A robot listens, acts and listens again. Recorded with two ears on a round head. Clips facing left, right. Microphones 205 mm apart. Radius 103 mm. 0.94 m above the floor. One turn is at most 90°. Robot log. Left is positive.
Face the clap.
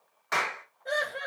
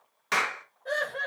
note: The clap: about 45° right or 135° right.
cmd yaw -45
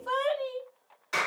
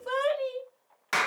note: So it is at 85° right.
cmd yaw -85
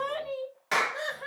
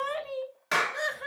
end: Facing the clap, under 1 m away.